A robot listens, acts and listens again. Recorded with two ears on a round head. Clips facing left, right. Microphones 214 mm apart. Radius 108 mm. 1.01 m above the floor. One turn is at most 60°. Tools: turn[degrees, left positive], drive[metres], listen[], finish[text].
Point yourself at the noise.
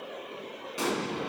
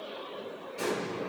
Thought: The explosion: about 75° left or 105° left.
Action: turn[60]
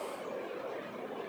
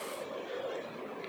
Action: listen[]
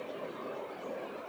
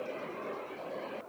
Action: finish[I heard an explosion, but can't make it out now. It was about 15° left or 45° left.]